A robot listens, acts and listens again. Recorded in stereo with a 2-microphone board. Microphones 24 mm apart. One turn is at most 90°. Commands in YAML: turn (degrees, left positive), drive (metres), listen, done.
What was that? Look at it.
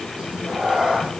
turn: -45
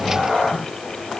turn: -90
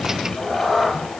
turn: 10
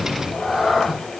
done: "Facing the cat meowing, over 4 m away."